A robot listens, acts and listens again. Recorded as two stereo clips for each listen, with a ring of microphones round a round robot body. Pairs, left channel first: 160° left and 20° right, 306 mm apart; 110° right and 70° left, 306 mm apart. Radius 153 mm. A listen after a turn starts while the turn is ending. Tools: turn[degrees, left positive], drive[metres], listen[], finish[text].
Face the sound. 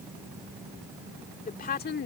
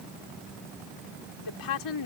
Thought: The woman speaking: 145° right.
Action: turn[-145]
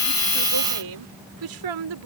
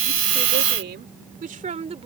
Action: finish[Facing the woman speaking.]